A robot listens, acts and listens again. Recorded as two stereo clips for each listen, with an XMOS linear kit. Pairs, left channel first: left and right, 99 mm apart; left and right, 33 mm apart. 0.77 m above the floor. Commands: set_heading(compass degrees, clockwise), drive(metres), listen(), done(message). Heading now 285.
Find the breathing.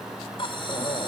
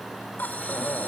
set_heading(225)
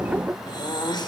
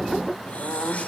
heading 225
set_heading(175)
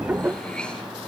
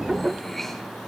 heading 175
set_heading(165)
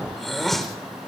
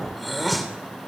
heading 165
done("Facing the breathing.")